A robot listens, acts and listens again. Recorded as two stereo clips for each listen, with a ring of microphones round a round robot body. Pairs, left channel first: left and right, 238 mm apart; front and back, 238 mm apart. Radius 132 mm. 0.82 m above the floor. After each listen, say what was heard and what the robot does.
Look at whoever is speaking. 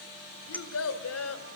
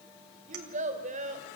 The child speaking: 115° left. Turn 115° left.
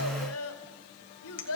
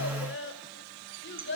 The child speaking is now 50° left. Turn 50° left.
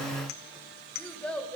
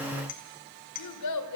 Facing the child speaking.